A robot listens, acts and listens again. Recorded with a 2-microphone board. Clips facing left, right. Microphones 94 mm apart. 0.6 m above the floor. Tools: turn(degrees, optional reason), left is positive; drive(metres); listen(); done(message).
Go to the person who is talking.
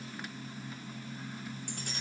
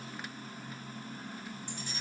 listen()
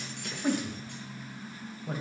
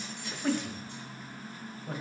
turn(degrees=30)
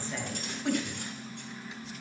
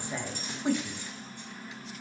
turn(degrees=-20, reason="So it is at 20° right.")
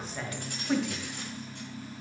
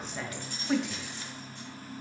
drive(metres=1.0)
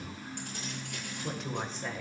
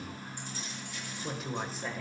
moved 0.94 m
drive(metres=1.0)
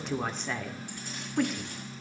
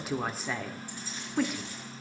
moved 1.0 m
drive(metres=1.0)
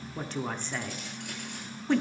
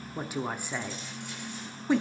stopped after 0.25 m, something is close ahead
turn(degrees=-10, reason="The woman speaking is now 10° right.")
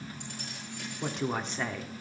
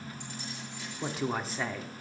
done("I am next to the woman speaking.")